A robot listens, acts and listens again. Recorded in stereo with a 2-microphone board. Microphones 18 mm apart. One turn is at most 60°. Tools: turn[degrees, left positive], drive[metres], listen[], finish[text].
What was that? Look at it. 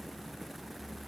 Action: listen[]
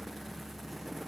Action: listen[]
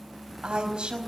Action: turn[-60]
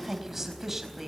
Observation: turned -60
Thought: So it is at 20° right.
Action: turn[-20]
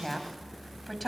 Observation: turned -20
Action: finish[Facing the woman speaking.]